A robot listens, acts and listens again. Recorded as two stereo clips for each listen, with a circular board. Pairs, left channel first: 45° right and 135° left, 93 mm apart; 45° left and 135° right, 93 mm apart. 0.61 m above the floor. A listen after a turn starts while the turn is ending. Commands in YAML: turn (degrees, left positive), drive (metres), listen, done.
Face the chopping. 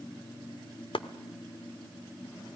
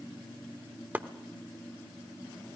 turn: -65
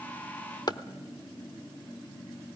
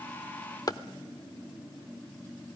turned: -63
done: "Facing the chopping."